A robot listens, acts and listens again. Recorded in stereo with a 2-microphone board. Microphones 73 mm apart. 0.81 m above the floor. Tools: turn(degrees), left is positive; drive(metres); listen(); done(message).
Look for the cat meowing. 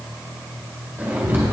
turn(degrees=-90)
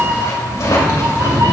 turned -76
turn(degrees=-55)
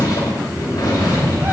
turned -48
turn(degrees=-35)
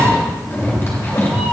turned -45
done("Found it: a cat meowing, straight ahead, 2 to 4 m away.")